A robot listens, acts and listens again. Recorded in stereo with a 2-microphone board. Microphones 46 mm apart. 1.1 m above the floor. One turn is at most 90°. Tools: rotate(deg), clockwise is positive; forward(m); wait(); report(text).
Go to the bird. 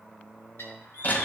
rotate(-70)
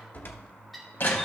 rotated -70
forward(1.0)
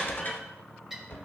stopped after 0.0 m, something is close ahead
report("Something is in my way. I am facing the bird but have not reached it.")